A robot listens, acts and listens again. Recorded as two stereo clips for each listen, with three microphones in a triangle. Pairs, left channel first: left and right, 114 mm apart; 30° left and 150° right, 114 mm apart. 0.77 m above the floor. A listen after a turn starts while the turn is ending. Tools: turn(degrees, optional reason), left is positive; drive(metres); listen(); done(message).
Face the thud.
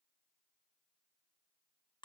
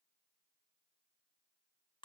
listen()
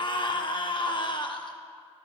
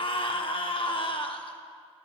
listen()
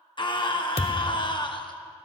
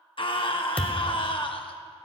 turn(degrees=110, reason="The thud: 110° left.")
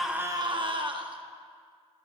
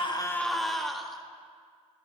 done("I heard a thud from this way, but can't make it out now.")